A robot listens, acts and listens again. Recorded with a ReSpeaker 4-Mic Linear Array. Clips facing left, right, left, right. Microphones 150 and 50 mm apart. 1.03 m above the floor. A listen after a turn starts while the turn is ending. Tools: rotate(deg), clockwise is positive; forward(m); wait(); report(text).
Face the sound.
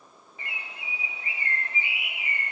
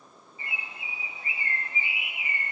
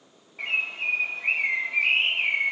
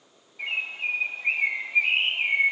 rotate(-75)
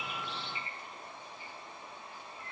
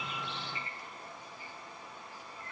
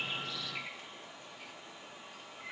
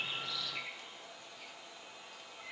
rotate(-25)
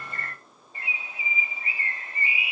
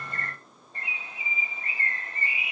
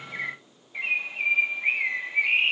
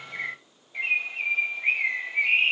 report("Facing the bird.")